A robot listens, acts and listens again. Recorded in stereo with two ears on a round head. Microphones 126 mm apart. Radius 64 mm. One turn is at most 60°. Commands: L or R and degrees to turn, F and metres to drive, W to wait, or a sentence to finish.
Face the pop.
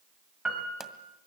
L30
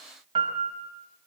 W
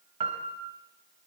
I heard a pop, but can't make it out now. It was about 30° right or 150° left.